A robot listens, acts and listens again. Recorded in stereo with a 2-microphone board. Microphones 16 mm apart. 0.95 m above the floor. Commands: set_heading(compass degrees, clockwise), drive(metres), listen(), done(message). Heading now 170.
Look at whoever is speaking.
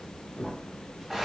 listen()
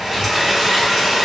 listen()
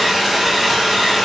done("I can't make out anyone speaking, only crumpling and a hair dryer.")